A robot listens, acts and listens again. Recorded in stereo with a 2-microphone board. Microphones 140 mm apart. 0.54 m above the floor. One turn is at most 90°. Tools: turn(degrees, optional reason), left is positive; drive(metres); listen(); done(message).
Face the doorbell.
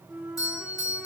turn(degrees=25, reason="The doorbell: about 25° left or 155° left.")
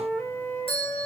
turn(degrees=90, reason="So it is at 125° left.")
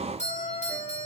turn(degrees=75, reason="The doorbell is now 75° left.")
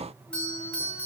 turn(degrees=10, reason="The doorbell is now 10° left.")
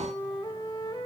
listen()
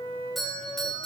done("Facing the doorbell.")